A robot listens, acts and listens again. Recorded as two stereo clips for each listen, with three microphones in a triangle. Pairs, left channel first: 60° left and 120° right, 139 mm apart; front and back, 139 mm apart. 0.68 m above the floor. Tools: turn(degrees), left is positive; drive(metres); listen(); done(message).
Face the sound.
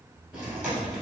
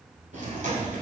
turn(degrees=155)
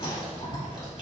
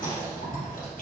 done("Facing the chewing.")